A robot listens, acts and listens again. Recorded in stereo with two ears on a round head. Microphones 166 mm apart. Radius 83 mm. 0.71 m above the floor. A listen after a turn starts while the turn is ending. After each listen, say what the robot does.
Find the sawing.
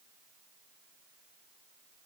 Keep listening.
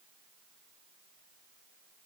Keep listening.
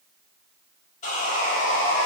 Turn 40° left.
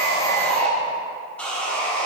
Found it: sawing, straight ahead, 1 to 2 m away.